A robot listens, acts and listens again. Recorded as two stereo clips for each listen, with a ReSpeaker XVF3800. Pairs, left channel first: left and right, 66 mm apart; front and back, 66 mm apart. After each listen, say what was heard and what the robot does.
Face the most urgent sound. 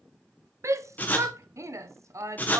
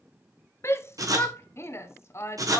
The shout: 50° right. Turn 50° right.
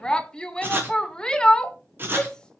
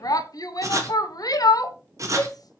The shout is now 15° left. Turn 15° left.
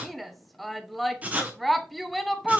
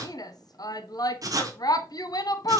Found it: a shout, straight ahead, under 1 m away.